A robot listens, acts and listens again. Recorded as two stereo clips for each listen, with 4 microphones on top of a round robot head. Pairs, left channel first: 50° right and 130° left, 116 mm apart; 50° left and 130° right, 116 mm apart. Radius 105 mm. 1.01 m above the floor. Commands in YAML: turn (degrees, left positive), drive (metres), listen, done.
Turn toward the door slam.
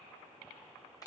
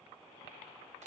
listen: true
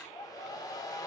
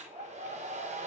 listen: true
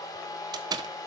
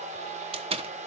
turn: -170
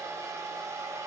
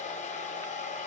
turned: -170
done: "I heard a door slam from this way, but can't make it out now."